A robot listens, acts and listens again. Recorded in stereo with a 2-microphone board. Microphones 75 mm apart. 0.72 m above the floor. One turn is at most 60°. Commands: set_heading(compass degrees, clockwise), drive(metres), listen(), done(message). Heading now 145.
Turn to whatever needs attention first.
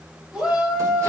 set_heading(175)
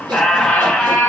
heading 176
listen()
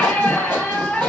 listen()
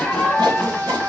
set_heading(236)
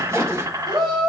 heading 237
set_heading(297)
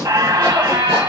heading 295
set_heading(310)
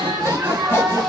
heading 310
done("Found it: a shout, straight ahead, 2 to 4 m away.")